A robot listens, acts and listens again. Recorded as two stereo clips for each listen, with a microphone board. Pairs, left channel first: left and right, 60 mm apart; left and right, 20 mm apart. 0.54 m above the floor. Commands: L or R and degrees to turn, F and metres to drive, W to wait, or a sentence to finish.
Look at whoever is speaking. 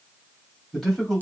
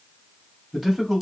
L30
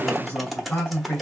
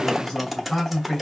L140
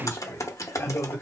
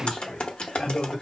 L40
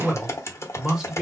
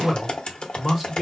R10
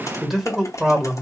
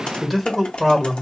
R10
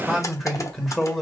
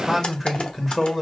Found it: a man speaking, straight ahead, 1 to 2 m away.